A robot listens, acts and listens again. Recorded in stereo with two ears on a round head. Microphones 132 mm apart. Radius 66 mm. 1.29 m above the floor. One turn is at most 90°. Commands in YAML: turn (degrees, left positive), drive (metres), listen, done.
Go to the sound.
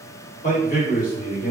turn: 60
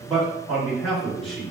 drive: 1.0
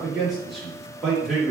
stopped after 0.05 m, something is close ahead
done: "Blocked. The man speaking is further on, straight ahead."